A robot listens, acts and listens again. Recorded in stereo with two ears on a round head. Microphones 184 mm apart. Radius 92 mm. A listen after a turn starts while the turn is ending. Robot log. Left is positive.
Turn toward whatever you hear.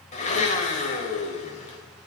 note: The blender: about 35° left or 145° left.
cmd yaw +35
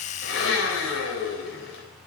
note: So it is at 110° left.
cmd yaw +110
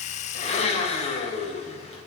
note: The blender is now 30° left.
cmd yaw +30
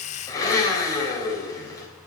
note: The blender is now 15° left.
cmd yaw +15
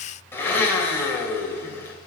note: The blender is now 10° left.
cmd yaw +10
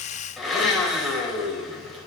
end: Facing the blender, 2 to 4 m away.